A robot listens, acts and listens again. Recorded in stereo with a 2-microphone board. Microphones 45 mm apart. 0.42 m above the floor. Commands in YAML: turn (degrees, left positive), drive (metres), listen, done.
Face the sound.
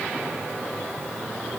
listen: true
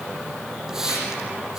turn: -30
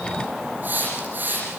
turn: -140
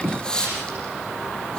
turn: 15
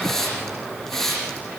done: "Facing the hiss."